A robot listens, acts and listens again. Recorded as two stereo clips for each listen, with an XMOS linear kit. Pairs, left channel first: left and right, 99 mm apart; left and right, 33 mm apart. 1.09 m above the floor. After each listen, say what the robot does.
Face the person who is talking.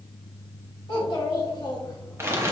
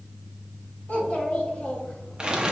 Turn 45° left.
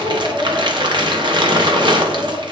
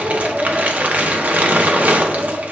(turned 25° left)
Facing the child speaking, 2 to 4 m away.